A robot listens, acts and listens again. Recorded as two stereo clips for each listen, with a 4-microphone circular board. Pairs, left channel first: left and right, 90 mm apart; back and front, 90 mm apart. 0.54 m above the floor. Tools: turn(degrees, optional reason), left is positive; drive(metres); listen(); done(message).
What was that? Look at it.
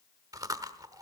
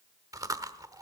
turn(degrees=-45, reason="The chewing: 45° right.")
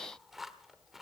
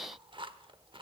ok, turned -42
done("Found it: chewing, straight ahead.")